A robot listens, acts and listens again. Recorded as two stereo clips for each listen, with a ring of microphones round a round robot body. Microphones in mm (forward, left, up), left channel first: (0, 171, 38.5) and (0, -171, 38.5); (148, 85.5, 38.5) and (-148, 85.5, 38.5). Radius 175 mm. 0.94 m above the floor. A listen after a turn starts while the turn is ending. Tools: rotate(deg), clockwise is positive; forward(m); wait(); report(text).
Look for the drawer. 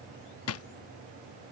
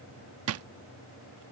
rotate(-140)
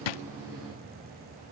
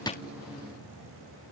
wait()
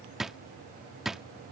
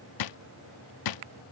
report("Found it: a drawer, straight ahead.")